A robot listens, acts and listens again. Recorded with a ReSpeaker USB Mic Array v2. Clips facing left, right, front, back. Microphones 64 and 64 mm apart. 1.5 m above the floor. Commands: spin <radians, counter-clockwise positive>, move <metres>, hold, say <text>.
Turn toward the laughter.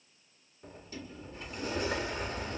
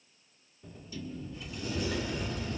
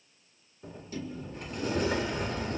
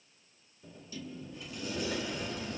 hold
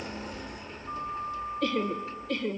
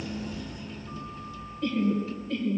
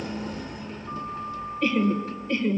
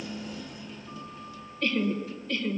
spin 1.13
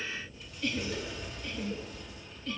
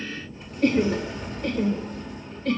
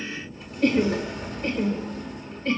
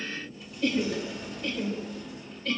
spin -1.05
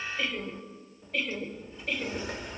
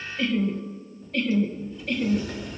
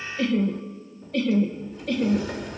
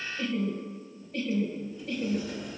say Facing the laughter, 1 to 2 m away.